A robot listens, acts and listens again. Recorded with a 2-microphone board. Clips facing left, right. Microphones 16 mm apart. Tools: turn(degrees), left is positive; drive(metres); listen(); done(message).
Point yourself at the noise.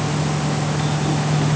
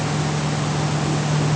listen()
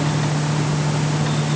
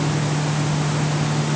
listen()
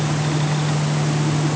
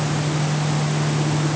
done("I can't make out anything to turn to.")